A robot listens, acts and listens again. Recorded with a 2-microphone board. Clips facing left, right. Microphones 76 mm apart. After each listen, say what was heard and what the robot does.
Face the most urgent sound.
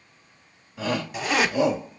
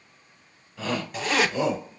Turn 30° left.
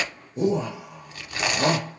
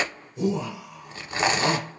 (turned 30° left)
So it is at 130° left. Turn 130° left.
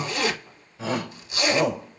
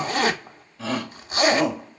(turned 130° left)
The shout is now 20° left. Turn 20° left.
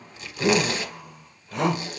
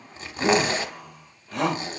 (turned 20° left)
The shout is now 10° left. Turn 10° left.
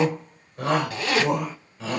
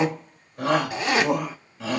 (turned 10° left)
Found it: a shout, straight ahead, 2 to 4 m away.